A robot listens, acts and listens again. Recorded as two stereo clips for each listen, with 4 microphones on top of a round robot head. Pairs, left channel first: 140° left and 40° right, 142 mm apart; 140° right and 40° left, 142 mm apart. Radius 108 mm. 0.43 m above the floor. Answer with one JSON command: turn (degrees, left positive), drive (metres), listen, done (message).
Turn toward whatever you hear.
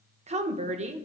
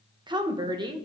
{"turn": -10}
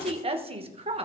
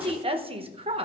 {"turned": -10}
{"done": "Found it: a woman speaking, straight ahead, 1 to 2 m away."}